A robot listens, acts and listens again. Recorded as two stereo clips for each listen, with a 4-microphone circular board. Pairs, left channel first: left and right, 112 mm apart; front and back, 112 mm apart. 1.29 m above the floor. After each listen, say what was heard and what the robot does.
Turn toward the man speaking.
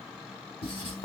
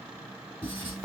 Keep listening.
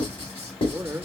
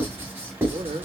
The man speaking: 155° right. Turn 155° right.
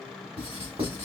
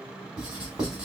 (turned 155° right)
Keep listening.
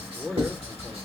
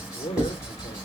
Found it: a man speaking, straight ahead, under 1 m away.